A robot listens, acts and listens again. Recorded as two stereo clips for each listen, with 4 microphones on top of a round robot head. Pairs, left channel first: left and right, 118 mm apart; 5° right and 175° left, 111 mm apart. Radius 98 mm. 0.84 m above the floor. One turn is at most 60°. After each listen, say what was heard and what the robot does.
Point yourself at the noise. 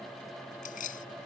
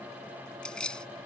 The keys jangling: 75° left. Turn 60° left.
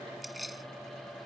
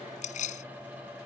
Found it: keys jangling, straight ahead.